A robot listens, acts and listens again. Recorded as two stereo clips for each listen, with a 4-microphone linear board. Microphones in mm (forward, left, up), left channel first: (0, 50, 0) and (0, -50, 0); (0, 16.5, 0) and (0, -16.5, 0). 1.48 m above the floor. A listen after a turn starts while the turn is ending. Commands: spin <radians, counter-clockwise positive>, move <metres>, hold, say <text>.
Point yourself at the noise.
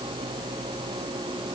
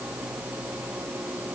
hold
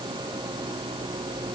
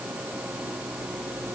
hold
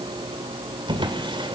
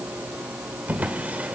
spin -0.96
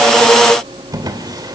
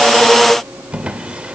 spin -0.87
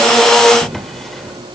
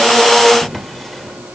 say Facing the drawer.